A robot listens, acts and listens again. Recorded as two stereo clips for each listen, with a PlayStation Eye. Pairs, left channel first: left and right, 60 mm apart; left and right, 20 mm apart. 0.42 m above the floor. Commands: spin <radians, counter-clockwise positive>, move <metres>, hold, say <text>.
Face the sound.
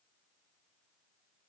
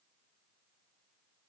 hold
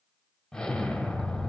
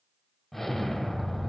spin 0.26
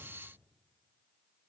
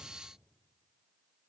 hold
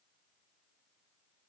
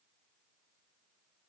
say I heard an explosion, but can't make it out now. It was about straight ahead or 150° left.